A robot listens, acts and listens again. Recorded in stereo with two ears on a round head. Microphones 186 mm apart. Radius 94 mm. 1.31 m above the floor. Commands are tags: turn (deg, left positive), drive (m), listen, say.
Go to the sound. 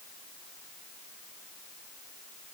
<listen/>
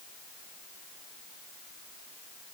<listen/>
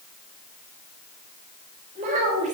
<turn deg="-35"/>
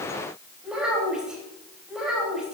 <drive m="1.0"/>
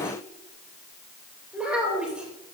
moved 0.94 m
<drive m="1.0"/>
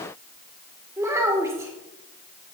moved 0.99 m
<turn deg="-15"/>
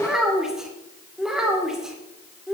<drive m="1.0"/>
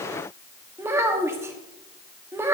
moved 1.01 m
<turn deg="-15"/>
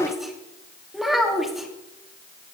<drive m="1.0"/>
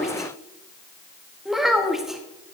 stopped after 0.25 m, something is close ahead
<say>I am next to the child speaking.</say>